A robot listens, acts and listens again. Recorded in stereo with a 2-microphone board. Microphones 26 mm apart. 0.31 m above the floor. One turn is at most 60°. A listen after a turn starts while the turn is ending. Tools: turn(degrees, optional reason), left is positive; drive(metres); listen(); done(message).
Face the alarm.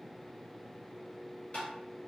listen()
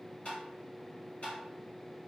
listen()
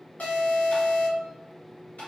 turn(degrees=60, reason="The alarm: about 70° left or 110° left.")
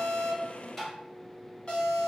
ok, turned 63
turn(degrees=35, reason="So it is at 35° left.")
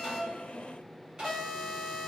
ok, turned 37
done("Facing the alarm.")